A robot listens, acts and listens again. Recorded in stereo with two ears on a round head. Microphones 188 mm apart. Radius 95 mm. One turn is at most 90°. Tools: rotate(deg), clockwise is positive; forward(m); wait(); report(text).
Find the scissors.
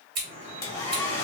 rotate(55)
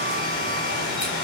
wait()
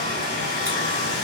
wait()
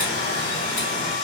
report("I heard scissors, but can't make it out now. It was about straight ahead or 70° right.")